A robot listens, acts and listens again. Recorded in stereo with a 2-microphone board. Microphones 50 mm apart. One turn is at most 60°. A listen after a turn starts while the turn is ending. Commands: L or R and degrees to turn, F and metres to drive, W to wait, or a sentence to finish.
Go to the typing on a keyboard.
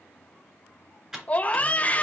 R30
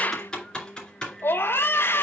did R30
L15
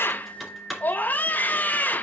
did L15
F1.0
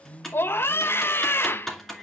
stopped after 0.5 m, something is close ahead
Blocked. The typing on a keyboard is further on, straight ahead.